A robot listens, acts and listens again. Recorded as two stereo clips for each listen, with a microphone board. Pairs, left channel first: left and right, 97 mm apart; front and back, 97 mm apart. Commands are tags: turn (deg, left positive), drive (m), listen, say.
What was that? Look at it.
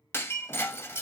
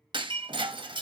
<turn deg="150"/>
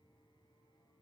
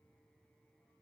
<say>Facing where the breaking glass came from. I can't hear it now.</say>